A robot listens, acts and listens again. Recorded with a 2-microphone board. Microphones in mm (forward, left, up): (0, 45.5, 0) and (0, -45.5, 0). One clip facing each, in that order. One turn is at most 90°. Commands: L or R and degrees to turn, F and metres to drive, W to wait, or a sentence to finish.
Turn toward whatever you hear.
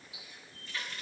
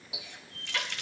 R90
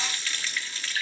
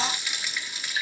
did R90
R15
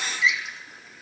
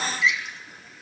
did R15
Facing the running tap, under 1 m away.